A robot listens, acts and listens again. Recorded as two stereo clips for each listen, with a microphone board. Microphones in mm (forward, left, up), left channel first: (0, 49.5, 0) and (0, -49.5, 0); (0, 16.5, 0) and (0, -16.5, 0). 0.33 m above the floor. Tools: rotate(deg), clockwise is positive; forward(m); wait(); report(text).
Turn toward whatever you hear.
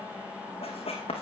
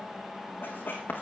rotate(-90)
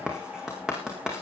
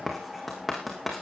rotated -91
rotate(10)
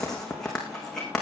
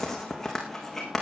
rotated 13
report("Found it: writing, straight ahead.")